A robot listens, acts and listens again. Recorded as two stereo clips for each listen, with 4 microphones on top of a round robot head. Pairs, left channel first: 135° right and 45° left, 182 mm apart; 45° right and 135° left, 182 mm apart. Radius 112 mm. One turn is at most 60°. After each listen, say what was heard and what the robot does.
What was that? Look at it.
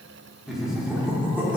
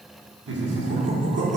The laughter: 125° left. Turn 60° left.
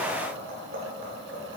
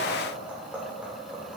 The laughter is now 50° left. Turn 50° left.
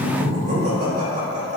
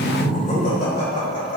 Found it: laughter, straight ahead, 2 to 4 m away.